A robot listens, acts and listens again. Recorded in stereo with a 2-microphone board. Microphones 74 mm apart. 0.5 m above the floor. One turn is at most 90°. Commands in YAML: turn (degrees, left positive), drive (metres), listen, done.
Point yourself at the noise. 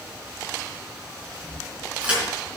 turn: -15
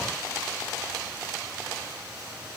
listen: true
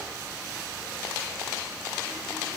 done: "I heard a crack, but can't make it out now. It was about straight ahead or 150° right."